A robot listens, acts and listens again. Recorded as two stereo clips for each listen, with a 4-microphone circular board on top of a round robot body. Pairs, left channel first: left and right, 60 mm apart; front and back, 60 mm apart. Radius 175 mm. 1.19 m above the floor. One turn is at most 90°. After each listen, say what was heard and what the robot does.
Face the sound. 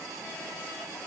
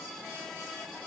Keep listening.
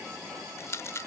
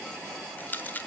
The rattle: 55° left. Turn 55° left.
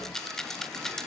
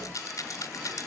Facing the rattle.